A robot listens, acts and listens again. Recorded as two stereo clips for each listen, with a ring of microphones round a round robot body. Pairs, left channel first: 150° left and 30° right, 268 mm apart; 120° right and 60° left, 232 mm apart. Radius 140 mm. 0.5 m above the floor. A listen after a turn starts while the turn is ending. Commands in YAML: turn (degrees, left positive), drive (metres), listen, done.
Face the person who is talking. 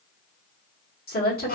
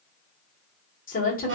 turn: -165
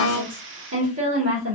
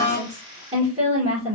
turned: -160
done: "Found it: a woman speaking, straight ahead, 1 to 2 m away."